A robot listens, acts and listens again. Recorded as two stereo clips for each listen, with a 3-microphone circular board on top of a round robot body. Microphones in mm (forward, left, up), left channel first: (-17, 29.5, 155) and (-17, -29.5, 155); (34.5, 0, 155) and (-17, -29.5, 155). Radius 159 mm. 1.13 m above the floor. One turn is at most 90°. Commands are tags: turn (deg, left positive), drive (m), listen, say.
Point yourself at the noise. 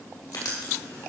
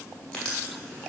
<turn deg="90"/>
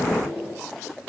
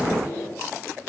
<turn deg="15"/>
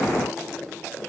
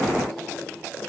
<listen/>
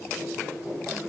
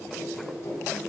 <say>Facing the writing.</say>